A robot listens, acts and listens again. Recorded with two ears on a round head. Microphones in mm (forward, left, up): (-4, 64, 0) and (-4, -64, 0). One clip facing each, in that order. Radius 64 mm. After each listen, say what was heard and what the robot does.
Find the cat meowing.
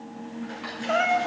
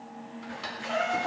The cat meowing: about 70° left or 110° left. Turn 70° left.
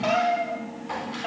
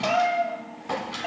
Found it: a cat meowing, straight ahead, 2 to 4 m away.